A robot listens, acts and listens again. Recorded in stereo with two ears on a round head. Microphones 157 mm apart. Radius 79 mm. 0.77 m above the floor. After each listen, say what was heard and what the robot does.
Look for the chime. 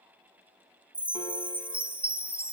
Turn 30° right.
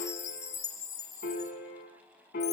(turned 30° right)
So it is at 20° left. Turn 20° left.
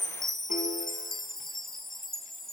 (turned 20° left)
Found it: a chime, straight ahead, 1 to 2 m away.